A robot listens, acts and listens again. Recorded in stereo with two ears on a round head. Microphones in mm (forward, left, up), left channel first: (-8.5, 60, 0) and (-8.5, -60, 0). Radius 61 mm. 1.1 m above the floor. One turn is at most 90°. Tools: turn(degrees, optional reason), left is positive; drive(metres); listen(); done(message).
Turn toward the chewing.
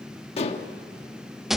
listen()
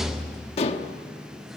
listen()
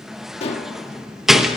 done("I can't make out chewing to turn to.")